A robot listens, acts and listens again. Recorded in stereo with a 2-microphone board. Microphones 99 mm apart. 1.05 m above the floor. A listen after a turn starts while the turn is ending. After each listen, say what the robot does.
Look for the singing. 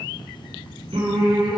Turn 70° right.
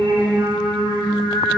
Turn 45° right.
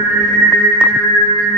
Turn 10° left.
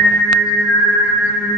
Found it: singing, straight ahead, over 4 m away.